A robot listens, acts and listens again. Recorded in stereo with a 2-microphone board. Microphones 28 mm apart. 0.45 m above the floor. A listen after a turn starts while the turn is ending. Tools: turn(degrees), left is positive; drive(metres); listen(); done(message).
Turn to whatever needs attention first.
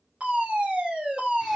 turn(degrees=-60)
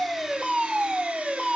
turn(degrees=-25)
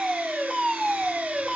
done("Facing the fire alarm.")